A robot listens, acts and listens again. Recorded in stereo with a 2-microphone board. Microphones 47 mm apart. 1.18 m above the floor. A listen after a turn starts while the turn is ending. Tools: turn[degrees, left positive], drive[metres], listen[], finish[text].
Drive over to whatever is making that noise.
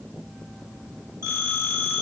Thought: The phone ringing: about 65° right or 115° right.
Action: turn[-65]
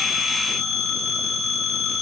Action: drive[1.0]
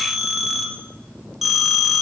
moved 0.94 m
Action: drive[1.0]
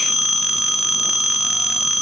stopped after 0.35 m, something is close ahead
Thought: The phone ringing is now 15° right.
Action: turn[-15]
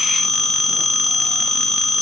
Action: finish[Arrived at the phone ringing, straight ahead.]